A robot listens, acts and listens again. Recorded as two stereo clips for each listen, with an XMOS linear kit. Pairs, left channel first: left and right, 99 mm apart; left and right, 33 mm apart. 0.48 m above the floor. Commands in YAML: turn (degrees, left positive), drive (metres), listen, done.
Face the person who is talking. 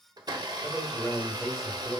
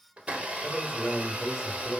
turn: -30
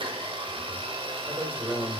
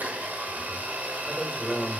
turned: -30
turn: -145
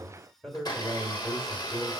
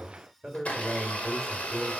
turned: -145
done: "Found it: a man speaking, straight ahead."